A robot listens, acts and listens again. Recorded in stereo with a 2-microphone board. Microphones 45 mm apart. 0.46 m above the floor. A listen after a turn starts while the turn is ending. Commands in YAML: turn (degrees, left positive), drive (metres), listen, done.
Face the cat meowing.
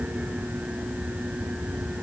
listen: true
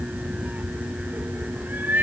turn: -45
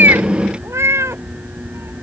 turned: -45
turn: -95
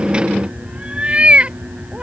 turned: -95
turn: -25
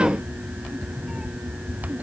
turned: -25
listen: true
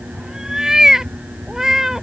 turn: -10
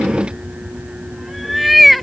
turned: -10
done: "Facing the cat meowing."